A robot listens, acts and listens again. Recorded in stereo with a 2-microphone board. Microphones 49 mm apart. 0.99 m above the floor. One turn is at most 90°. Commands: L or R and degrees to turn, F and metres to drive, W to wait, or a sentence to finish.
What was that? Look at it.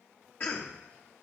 L40
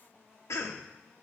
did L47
L90
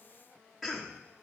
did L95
Facing the cough, under 1 m away.